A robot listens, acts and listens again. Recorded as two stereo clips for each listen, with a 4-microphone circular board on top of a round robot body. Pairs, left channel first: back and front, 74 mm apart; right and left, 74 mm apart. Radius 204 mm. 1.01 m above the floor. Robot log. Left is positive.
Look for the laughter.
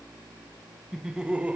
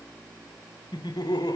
note: The laughter: 70° right.
cmd yaw -70
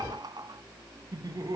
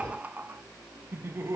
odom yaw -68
note: The laughter is now 35° left.
cmd yaw +35
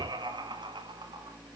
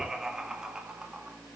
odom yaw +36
note: The laughter is now 10° left.
cmd yaw +10
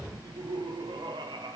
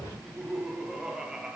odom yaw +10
note: The laughter is now 10° left.
cmd yaw +10
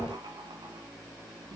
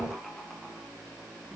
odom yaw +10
cmd idle
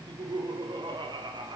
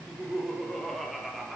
end: Found it: laughter, straight ahead, 2 to 4 m away.